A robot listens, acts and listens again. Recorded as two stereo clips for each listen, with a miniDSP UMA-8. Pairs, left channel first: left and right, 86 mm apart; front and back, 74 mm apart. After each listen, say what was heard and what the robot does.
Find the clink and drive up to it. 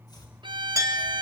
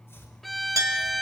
The clink: 140° right. Turn 140° right.
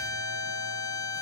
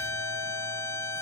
Keep listening.
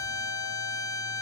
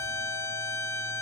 Keep listening.
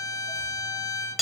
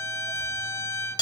Drive 1.0 m forward.
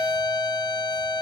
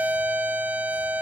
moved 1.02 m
The clink is now 10° right. Turn 10° right.
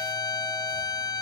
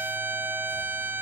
Keep listening.
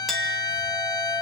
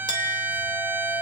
Drive 1.0 m forward.
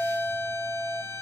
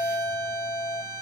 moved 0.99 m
Drive 1.0 m forward.
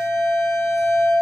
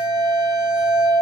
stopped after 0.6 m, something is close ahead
The clink is now 10° right. Turn 10° right.
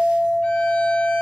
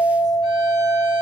Arrived at the clink, straight ahead.